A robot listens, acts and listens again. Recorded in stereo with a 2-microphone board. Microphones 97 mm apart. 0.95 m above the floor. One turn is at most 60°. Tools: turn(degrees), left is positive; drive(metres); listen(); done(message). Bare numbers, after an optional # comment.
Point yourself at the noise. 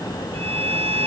turn(-60)
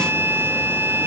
# So it is at 25° right.
turn(-25)
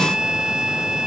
# The violin is now 10° right.
turn(-10)
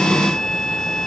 done("Found it: a violin, straight ahead.")